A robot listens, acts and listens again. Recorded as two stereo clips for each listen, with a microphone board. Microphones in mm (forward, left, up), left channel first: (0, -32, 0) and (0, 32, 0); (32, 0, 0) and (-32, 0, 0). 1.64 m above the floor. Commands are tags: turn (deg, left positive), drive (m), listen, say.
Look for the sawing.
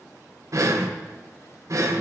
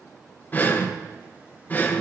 <listen/>
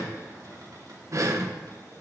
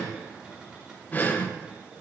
<listen/>
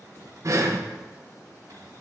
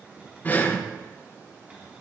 <say>I can't make out sawing, only breathing and a cupboard door.</say>